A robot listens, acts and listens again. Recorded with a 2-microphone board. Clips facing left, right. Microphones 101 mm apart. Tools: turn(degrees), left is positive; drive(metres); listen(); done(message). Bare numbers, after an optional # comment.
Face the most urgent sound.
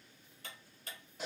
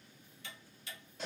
listen()
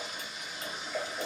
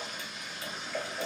listen()
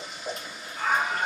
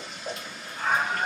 # The scream: about 25° right or 155° right.
turn(-25)
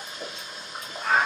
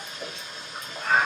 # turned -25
done("Found it: a scream, straight ahead, 2 to 4 m away.")